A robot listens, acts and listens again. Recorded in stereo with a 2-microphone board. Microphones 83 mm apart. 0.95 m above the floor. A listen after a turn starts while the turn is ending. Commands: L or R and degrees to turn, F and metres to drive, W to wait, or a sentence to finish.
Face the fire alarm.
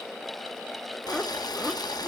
W
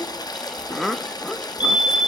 L65
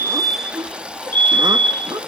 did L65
L25
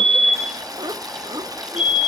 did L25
R15
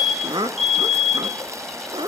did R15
Found it: a fire alarm, straight ahead.